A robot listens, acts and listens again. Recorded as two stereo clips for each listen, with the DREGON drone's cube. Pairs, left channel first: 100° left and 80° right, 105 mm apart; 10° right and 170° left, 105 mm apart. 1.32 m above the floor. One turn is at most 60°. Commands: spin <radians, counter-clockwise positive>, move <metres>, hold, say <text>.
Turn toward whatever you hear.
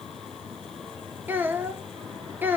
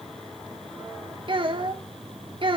spin -1.05
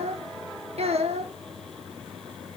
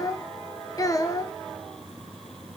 spin -1.05
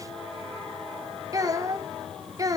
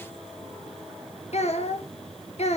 spin -0.35
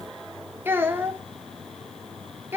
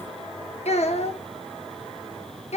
spin -0.17
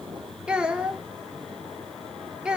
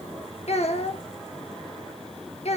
say Found it: a child speaking, straight ahead.